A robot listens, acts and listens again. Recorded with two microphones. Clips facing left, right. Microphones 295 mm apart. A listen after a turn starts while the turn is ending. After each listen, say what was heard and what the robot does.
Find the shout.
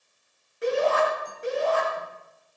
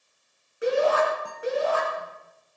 Turn 30° right.
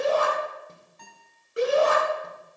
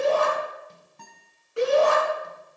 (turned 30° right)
So it is at 20° left. Turn 20° left.
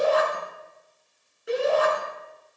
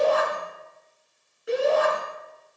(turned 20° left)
Found it: a shout, straight ahead.